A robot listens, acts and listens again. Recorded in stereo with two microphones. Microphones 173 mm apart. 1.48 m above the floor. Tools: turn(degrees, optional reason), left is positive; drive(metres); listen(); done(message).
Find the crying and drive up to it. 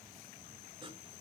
listen()
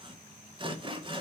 listen()
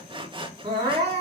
turn(degrees=-35, reason="The crying: about 35° right or 145° right.")
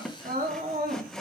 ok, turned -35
turn(degrees=-110, reason="So it is at 110° right.")
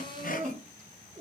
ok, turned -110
turn(degrees=-50, reason="The crying is now 50° right.")
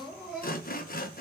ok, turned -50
drive(metres=1.0)
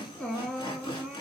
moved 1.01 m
drive(metres=1.0)
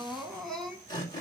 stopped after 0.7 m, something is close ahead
done("Arrived at the crying, straight ahead.")